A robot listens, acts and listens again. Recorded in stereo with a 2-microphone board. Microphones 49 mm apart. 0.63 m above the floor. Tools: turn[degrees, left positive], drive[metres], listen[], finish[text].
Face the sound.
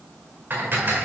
Thought: The dishes clattering: about 40° right or 140° right.
Action: turn[-40]
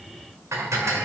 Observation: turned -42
Thought: So it is at 95° right.
Action: turn[-95]
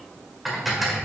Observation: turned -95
Action: finish[Found it: dishes clattering, straight ahead.]